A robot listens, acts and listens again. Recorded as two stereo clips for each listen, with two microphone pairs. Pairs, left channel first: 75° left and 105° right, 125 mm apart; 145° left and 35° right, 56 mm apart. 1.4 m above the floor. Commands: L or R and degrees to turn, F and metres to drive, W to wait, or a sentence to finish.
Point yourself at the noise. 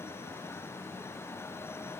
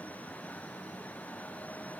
W
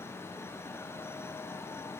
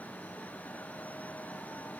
W
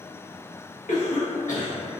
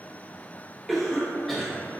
L55
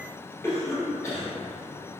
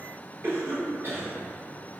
Facing the cough.